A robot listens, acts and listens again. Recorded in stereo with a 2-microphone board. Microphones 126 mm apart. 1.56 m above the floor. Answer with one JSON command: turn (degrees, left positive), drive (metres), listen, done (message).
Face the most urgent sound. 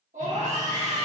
{"turn": -90}
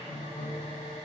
{"listen": true}
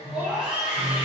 {"turn": -10}
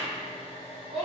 {"done": "Facing the scream."}